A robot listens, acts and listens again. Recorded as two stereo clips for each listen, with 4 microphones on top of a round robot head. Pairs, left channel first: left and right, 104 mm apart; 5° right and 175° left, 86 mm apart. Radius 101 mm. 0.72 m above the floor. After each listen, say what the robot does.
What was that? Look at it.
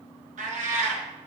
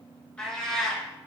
Turn 95° right.
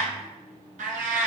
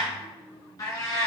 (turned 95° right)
Turn 75° right.
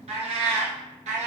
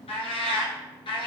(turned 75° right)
Turn 55° right.
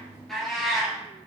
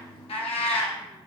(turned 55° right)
Found it: a cat meowing, straight ahead.